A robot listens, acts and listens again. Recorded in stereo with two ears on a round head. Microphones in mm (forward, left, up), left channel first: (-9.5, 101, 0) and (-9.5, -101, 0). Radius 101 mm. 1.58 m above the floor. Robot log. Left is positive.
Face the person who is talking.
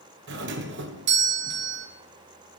cmd idle
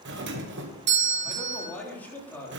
cmd yaw +30
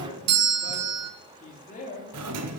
note: So it is at 145° left.
cmd yaw +145
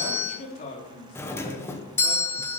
note: The man speaking is now 35° left.
cmd yaw +35
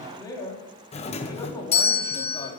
note: The man speaking is now 15° left.
cmd yaw +15
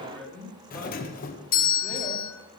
end: Facing the man speaking.